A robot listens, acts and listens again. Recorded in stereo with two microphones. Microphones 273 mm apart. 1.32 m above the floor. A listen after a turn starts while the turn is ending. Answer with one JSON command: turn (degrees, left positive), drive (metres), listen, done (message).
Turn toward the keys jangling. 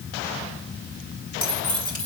{"turn": -15}
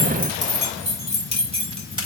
{"turn": -20}
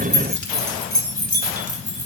{"turn": -25}
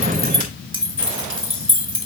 {"turn": -135}
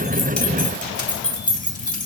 {"turn": 30}
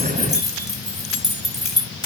{"done": "Found it: keys jangling, straight ahead, 2 to 4 m away."}